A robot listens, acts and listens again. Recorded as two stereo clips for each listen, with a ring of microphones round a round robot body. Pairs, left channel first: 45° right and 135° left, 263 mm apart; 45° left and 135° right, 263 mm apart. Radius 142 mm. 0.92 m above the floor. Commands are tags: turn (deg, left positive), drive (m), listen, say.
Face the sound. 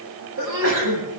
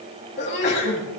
<turn deg="95"/>
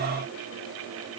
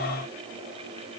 <say>I heard a sneeze from this way, but can't make it out now.</say>